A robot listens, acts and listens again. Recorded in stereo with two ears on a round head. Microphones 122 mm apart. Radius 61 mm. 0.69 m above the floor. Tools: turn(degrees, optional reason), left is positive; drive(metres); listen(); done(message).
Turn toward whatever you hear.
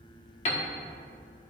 turn(degrees=50, reason="The piano: about 50° left or 130° left.")
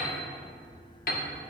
turn(degrees=80, reason="So it is at 80° left.")
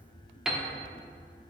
done("Facing the piano, under 1 m away.")